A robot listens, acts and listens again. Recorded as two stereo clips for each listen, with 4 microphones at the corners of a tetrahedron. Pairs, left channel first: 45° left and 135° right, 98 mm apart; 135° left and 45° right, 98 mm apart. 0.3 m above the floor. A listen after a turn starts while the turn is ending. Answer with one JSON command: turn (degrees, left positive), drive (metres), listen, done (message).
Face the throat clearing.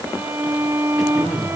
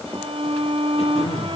{"turn": 135}
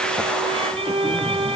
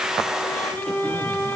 {"listen": true}
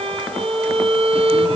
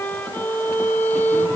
{"listen": true}
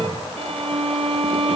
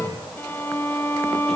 {"turn": 45}
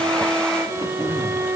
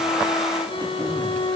{"done": "Facing the throat clearing, 2 to 4 m away."}